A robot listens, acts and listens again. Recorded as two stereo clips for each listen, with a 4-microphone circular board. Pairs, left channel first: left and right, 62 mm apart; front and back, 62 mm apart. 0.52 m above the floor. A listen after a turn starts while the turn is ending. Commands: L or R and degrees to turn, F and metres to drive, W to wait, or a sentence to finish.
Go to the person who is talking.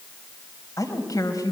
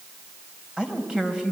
L105
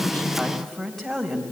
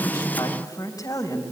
F1.0
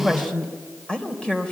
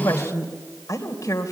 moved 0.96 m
L15
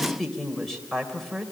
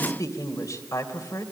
F1.0
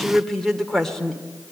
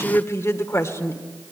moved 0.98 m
F1.0
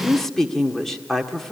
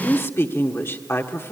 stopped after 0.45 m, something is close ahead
Arrived at the woman speaking, straight ahead.